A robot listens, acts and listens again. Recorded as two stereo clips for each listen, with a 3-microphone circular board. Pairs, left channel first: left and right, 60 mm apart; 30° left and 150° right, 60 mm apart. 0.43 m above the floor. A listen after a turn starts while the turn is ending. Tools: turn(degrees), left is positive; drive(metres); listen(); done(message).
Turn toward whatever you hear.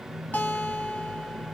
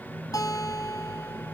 turn(degrees=35)
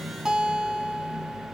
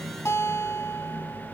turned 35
done("Facing the guitar, 1 to 2 m away.")